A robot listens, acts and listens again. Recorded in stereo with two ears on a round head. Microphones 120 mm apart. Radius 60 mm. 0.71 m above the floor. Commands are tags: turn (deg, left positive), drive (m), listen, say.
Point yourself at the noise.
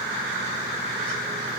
<listen/>
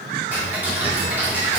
<turn deg="-30"/>
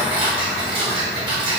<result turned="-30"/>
<turn deg="-135"/>
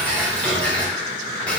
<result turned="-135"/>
<turn deg="10"/>
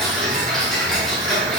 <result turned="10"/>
<say>Found it: ticking, straight ahead, 1 to 2 m away.</say>